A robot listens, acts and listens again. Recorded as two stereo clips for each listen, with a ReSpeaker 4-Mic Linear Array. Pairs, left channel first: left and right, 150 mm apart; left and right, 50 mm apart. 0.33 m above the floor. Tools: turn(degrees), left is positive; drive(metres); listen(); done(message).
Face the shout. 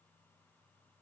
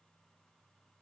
listen()
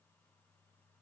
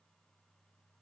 listen()
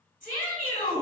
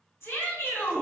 turn(degrees=65)
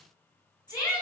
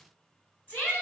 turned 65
turn(degrees=30)
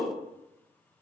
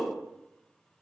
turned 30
turn(degrees=10)
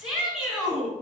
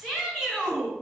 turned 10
done("Found it: a shout, straight ahead.")